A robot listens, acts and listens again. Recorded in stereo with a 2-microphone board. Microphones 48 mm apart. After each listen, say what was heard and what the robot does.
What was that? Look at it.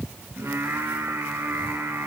The singing: about 65° right or 115° right. Turn 65° right.
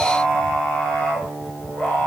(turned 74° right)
So it is at 25° left. Turn 25° left.
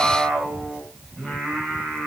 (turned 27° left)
The singing is now 10° left. Turn 10° left.
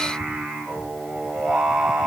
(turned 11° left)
Facing the singing.